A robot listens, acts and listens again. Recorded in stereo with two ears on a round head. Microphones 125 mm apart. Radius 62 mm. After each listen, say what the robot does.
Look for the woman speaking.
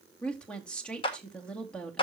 Turn 30° left.
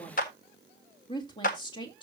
Turn 145° left.
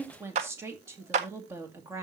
Turn 20° right.
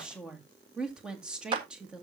Found it: a woman speaking, straight ahead.